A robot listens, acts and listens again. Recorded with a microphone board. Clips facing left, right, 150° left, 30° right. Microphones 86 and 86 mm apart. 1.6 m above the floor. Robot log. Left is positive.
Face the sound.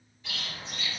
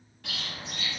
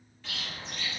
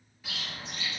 note: The bird: 110° right.
cmd yaw -110
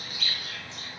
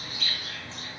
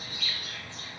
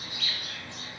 note: The bird is now 35° right.
cmd yaw -35
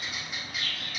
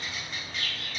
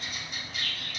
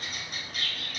note: The bird is now 10° left.
cmd yaw +10
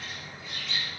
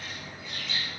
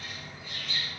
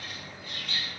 end: Found it: a bird, straight ahead, under 1 m away.